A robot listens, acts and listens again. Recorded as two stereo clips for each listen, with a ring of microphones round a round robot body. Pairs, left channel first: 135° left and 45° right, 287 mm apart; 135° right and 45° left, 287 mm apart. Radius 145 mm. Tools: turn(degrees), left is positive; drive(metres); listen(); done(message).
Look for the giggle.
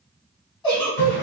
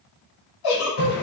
turn(degrees=-150)
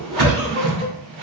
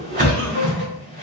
listen()
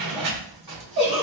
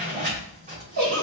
turn(degrees=10)
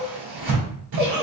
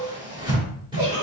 done("Facing the giggle.")